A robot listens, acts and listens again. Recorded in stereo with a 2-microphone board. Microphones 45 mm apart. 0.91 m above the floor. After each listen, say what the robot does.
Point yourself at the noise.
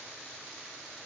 Keep listening.
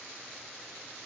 Keep listening.
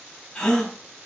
Turn 15° left.
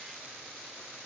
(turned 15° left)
Keep listening.
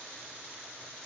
I heard a gasp, but can't make it out now. It was about straight ahead or 150° left.